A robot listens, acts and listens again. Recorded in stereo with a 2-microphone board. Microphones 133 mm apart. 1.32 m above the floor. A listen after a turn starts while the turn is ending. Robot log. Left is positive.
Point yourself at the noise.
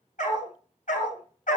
note: The dog barking: about 75° left or 105° left.
cmd yaw +75
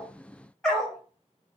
end: Facing the dog barking.